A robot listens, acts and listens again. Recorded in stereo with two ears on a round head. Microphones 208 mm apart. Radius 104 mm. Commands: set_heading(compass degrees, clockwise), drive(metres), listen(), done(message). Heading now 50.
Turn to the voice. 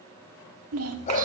set_heading(120)
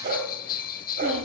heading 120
listen()
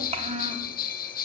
set_heading(150)
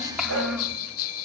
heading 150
done("Facing the child speaking.")